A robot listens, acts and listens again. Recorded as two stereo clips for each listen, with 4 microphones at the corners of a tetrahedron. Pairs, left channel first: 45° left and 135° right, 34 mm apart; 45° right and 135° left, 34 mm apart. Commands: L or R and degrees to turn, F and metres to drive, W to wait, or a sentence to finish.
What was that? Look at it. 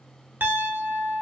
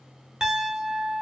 R155
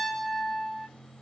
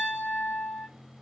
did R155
R40
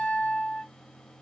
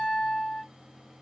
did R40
Facing the piano, under 1 m away.